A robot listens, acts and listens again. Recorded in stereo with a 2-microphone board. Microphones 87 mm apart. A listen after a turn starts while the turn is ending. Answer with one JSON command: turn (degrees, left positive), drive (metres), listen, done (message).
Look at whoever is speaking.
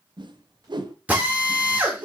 {"listen": true}
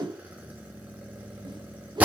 {"listen": true}
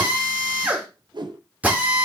{"done": "I can't make out anyone speaking to turn to."}